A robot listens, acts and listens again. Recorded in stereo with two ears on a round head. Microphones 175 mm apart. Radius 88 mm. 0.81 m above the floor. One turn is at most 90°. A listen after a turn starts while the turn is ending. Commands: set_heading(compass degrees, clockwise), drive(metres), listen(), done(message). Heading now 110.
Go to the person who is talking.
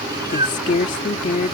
set_heading(75)
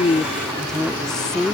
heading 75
drive(1.0)
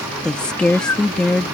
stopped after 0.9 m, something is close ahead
done("I am next to the woman speaking.")